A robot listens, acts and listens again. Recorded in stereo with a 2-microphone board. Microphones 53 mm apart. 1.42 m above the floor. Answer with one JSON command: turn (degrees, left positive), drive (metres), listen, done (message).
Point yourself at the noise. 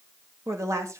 {"turn": -75}
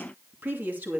{"turn": -35}
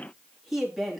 {"done": "Found it: a woman speaking, straight ahead, 2 to 4 m away."}